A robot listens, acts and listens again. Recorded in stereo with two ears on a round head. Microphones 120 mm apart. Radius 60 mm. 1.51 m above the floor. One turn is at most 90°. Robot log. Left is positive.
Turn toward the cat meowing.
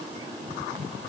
cmd idle
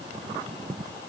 cmd idle
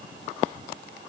end: I can't make out a cat meowing.